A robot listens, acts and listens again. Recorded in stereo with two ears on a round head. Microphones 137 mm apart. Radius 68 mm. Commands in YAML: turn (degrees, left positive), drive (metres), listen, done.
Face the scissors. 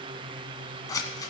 turn: 25
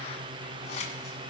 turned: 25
turn: 125
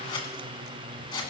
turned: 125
turn: 35
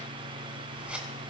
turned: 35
turn: -10
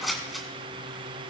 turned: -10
done: "Facing the scissors, 2 to 4 m away."